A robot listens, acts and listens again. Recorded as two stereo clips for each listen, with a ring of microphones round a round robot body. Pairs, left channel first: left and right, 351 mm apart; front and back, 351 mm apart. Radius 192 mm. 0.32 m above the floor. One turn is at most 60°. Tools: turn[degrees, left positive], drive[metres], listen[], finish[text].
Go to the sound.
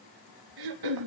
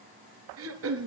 Thought: The throat clearing: 125° right.
Action: turn[-60]
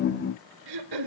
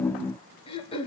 Thought: The throat clearing is now 75° right.
Action: turn[-60]
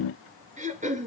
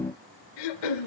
Thought: The throat clearing is now 20° right.
Action: turn[-20]
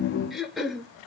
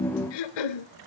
Action: drive[1.0]
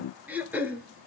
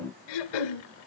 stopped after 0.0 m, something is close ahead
Action: finish[Something is in my way. I am facing the throat clearing but have not reached it.]